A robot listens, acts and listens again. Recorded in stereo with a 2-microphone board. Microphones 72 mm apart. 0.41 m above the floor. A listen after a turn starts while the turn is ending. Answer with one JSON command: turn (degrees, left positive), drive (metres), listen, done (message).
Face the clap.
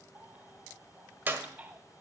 {"turn": -25}
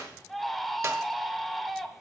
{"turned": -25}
{"listen": true}
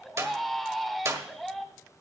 {"turn": -125}
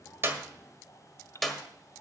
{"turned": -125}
{"done": "Found it: a clap, straight ahead."}